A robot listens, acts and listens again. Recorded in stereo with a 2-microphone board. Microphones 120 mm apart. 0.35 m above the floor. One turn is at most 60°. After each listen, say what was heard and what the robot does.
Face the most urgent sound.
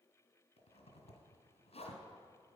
Keep listening.
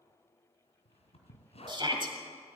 The shout: about 40° right or 140° right. Turn 40° right.
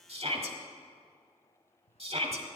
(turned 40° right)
So it is at 90° right. Turn 60° right.
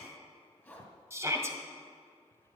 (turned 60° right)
The shout is now 30° right. Turn 30° right.
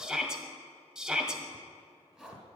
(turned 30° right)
Found it: a shout, straight ahead.